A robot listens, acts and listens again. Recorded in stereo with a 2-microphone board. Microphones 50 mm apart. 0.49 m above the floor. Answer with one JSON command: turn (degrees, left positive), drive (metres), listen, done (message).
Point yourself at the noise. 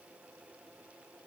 {"listen": true}
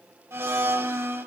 {"turn": -60}
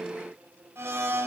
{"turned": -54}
{"turn": -60}
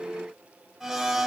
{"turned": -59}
{"done": "Facing the blender, under 1 m away."}